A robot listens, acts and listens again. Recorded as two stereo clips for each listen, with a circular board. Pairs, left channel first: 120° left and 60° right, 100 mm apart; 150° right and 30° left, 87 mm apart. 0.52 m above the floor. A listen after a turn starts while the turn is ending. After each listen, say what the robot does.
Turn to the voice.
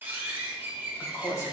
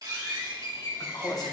Turn 175° left.
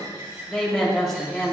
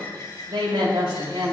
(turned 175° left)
Turn 35° left.
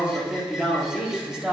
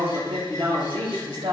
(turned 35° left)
Turn 20° left.
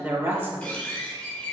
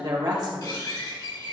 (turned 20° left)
Facing the woman speaking, 2 to 4 m away.